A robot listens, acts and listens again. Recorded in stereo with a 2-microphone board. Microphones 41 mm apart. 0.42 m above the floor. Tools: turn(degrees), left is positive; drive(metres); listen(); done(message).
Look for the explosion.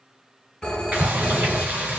turn(degrees=-70)
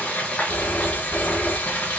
listen()
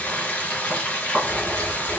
done("I heard an explosion, but can't make it out now. It was about straight ahead or 40° right.")